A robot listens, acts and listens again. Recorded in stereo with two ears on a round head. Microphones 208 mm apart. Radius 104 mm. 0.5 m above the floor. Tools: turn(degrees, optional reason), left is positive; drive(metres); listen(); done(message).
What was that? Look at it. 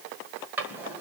turn(degrees=-30)
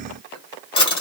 turn(degrees=25, reason="So it is at 25° left.")
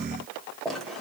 done("Facing the drawer.")